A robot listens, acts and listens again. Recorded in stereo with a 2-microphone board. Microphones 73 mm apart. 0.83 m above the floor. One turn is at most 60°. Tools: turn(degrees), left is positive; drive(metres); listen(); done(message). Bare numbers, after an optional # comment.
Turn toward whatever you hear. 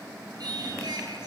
# The singing: about 70° right or 110° right.
turn(-60)
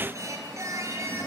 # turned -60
# So it is at 45° right.
turn(-45)
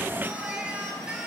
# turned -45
# The singing is now 10° right.
turn(-10)
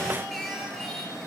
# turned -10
done("Found it: singing, straight ahead.")